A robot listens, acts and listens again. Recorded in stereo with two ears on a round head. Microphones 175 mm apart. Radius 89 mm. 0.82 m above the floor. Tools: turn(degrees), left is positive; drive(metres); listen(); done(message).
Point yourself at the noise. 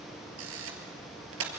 turn(degrees=-90)
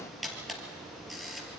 done("Found it: a camera shutter, straight ahead.")